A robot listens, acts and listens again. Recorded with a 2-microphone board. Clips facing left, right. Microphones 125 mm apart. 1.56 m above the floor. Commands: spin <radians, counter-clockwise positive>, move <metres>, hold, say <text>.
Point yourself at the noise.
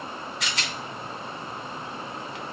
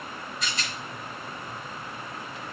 spin 1.57
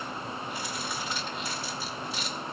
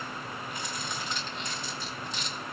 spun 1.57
say Facing the rattle, 1 to 2 m away.